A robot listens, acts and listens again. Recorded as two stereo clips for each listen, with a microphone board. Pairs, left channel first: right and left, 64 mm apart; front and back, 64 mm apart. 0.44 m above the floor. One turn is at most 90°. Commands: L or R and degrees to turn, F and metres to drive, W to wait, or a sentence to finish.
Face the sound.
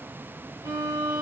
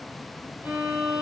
L90
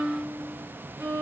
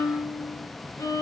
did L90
L30
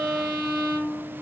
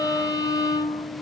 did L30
Facing the violin.